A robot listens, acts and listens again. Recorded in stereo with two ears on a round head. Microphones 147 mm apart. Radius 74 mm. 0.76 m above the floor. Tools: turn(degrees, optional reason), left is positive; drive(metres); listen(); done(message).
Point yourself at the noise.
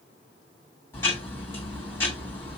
turn(degrees=15, reason="The ticking: about 15° left or 165° left.")
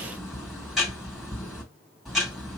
done("Facing the ticking, 2 to 4 m away.")